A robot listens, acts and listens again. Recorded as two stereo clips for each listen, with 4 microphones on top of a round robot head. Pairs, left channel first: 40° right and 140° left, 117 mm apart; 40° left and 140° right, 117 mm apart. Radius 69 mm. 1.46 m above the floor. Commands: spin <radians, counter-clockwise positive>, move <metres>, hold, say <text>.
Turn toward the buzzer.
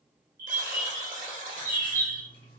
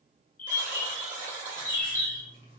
spin 2.79
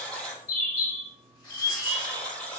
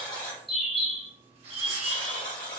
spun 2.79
spin 0.70
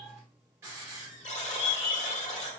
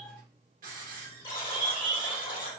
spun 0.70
spin -0.17
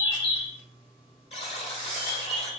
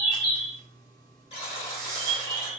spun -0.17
say Facing the buzzer.